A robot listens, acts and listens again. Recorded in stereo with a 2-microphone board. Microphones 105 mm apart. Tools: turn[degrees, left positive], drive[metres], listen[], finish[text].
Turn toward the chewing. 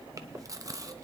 Thought: The chewing: about 35° right or 145° right.
Action: turn[-35]
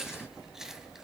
Action: finish[Found it: chewing, straight ahead, under 1 m away.]